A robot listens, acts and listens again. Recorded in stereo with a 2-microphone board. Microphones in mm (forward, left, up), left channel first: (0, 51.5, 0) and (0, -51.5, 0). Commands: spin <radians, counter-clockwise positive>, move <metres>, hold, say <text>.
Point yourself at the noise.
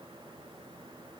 hold
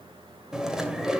spin -0.52
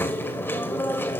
spin 0.44
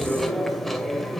say Found it: chewing, straight ahead.